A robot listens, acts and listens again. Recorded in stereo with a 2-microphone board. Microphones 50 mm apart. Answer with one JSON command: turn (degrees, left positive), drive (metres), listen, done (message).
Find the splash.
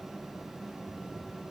{"listen": true}
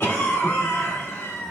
{"listen": true}
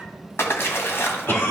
{"turn": 55}
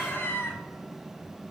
{"listen": true}
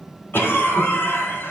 {"done": "I heard a splash, but can't make it out now. It was about straight ahead or 70° left."}